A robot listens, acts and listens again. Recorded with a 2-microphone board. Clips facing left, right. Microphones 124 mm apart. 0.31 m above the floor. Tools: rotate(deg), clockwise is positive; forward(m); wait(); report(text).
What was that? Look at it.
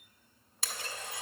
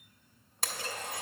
rotate(55)
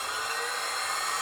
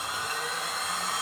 report("Facing the blender, under 1 m away.")